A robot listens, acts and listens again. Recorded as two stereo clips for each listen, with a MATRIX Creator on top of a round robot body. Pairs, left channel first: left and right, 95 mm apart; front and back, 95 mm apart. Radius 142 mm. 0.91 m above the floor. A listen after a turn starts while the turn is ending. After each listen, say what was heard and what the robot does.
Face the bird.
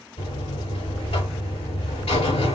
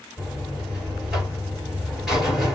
Keep listening.
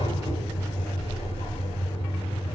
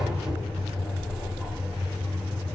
Keep listening.
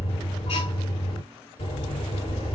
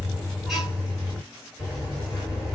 I can't make out a bird, only a buzzer.